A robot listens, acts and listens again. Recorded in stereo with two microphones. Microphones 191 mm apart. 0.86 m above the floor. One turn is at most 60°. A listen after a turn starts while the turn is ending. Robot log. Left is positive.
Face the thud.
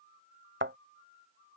cmd yaw -60
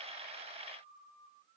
note: Nothing new. It was at 30° right.
cmd yaw -30
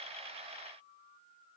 end: Facing where the thud came from. I can't hear it now.